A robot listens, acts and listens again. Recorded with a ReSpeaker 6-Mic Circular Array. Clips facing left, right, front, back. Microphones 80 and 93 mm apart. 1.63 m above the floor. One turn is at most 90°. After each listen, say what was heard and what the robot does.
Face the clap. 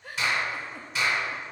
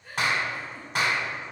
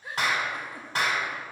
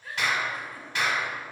The clap: 50° right. Turn 50° right.
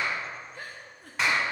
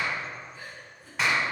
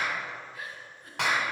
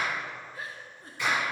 Found it: a clap, straight ahead, 1 to 2 m away.